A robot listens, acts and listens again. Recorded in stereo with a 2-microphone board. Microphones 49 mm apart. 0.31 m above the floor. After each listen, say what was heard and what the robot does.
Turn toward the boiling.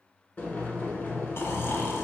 The boiling: about 40° left or 140° left. Turn 40° left.
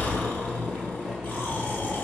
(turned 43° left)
Found it: boiling, straight ahead, 1 to 2 m away.